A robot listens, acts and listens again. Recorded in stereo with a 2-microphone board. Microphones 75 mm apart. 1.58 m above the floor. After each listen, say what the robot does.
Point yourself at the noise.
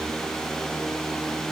Keep listening.
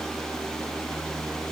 Keep listening.
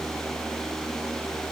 I can't make out anything to turn to.